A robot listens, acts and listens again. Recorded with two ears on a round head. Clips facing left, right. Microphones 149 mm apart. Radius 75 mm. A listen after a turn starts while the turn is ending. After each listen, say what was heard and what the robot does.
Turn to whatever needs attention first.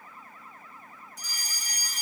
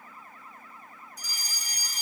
The fire alarm: about 50° left or 130° left. Turn 50° left.
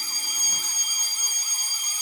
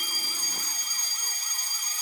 So it is at 10° left. Turn 10° left.
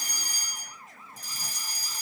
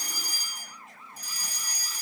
Found it: a fire alarm, straight ahead, 2 to 4 m away.